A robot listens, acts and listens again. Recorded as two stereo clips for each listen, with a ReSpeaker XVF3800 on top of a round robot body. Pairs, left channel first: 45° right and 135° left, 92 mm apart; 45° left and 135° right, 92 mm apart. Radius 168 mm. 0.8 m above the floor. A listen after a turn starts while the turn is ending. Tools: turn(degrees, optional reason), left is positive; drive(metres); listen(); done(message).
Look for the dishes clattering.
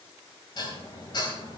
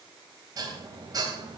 turn(degrees=-90, reason="The dishes clattering: 90° right.")
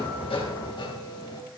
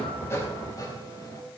done("Found it: dishes clattering, straight ahead.")